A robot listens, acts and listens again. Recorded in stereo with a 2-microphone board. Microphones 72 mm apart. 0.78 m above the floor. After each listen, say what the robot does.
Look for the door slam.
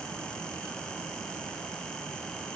Keep listening.
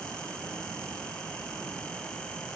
Keep listening.
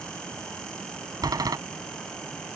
Turn 65° right.
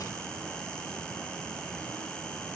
Keep listening.
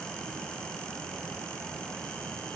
I heard a door slam, but can't make it out now. It was about straight ahead or 50° right.